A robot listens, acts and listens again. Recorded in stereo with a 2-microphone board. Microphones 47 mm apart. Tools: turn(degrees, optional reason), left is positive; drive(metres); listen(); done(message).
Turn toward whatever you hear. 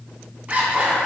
turn(degrees=-30, reason="The zipper: about 30° right or 150° right.")
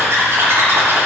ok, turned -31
turn(degrees=-120, reason="So it is at 120° right.")
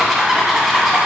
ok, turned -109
turn(degrees=-10, reason="The zipper is now 10° right.")
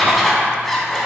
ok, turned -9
done("Found it: a zipper, straight ahead.")